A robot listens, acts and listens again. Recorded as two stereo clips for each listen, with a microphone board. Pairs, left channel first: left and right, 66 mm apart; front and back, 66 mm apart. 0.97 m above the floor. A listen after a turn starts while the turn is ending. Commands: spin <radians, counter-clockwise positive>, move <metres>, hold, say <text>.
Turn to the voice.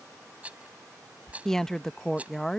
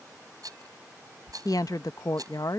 say Found it: a woman speaking, straight ahead.